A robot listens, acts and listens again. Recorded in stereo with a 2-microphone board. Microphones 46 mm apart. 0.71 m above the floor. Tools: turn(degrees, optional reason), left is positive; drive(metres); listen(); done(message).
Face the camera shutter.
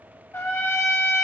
listen()
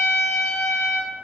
listen()
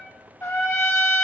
done("I can't make out a camera shutter, only a trumpet.")